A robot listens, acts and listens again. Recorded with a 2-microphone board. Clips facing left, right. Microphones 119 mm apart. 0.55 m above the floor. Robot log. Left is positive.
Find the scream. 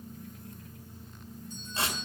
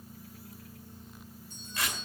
cmd idle
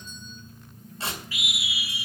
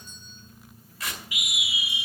cmd yaw -30
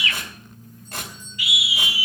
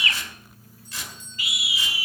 note: So it is at 135° right.
cmd yaw -135
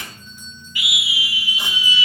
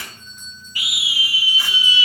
note: The scream is now 40° right.
cmd yaw -40
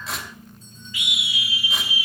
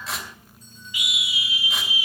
note: The scream is now 20° right.
cmd yaw -20
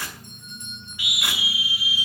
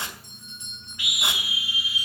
end: Facing the scream.